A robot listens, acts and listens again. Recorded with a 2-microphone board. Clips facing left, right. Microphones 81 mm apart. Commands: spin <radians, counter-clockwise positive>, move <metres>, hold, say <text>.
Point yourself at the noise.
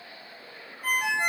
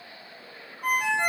spin -1.13
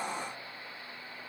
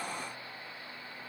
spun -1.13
hold
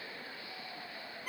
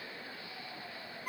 spin -0.44
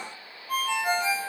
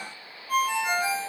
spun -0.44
say Facing the ringtone, 1 to 2 m away.